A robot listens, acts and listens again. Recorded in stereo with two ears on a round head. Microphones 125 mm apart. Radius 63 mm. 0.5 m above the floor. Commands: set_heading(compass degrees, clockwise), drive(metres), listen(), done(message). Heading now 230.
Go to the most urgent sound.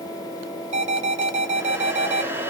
set_heading(280)
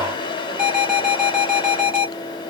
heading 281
drive(1.0)
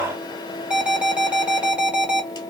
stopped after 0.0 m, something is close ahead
set_heading(291)
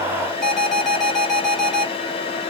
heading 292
done("Blocked. The alarm is further on, straight ahead.")